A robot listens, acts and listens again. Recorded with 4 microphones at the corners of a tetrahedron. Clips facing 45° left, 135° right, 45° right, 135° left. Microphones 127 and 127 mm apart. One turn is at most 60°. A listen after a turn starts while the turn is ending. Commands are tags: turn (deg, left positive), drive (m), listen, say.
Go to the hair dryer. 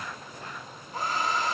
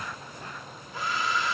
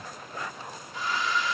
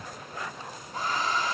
<turn deg="60"/>
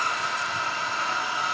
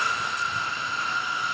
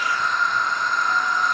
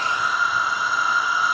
<turn deg="50"/>
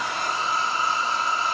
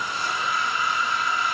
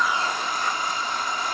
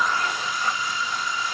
<turn deg="-10"/>
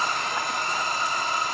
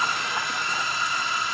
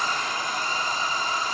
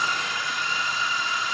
<drive m="1.0"/>
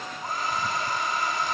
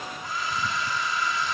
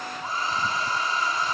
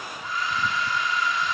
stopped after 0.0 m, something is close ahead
<say>Blocked. The hair dryer is further on, straight ahead.</say>